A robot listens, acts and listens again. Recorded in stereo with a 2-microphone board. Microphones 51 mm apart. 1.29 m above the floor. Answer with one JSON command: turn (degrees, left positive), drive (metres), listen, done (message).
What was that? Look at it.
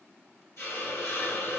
{"turn": 55}
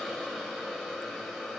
{"done": "Found it: a hiss, straight ahead."}